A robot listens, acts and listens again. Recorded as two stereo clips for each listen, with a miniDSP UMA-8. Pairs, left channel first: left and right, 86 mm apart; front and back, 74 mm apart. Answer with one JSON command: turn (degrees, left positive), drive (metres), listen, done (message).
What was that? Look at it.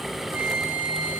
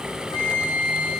{"turn": -20}
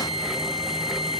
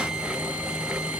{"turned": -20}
{"listen": true}
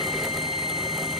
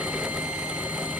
{"listen": true}
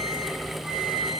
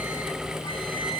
{"done": "Facing where the flute came from. I can't hear it now."}